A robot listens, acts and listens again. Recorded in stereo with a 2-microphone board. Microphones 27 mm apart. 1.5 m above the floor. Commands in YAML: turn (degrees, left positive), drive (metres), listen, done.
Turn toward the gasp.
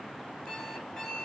listen: true
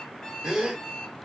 turn: -20
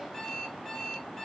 listen: true
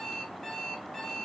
done: "I heard a gasp, but can't make it out now. It was about straight ahead or 140° right."